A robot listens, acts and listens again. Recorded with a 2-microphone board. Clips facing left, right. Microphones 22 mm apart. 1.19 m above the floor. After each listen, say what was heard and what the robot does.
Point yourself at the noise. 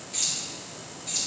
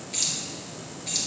The keys jangling: about 35° right or 145° right. Turn 35° right.
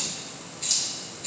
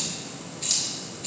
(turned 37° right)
So it is at 10° right. Turn 10° right.
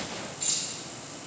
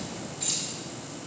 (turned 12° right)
Facing the keys jangling.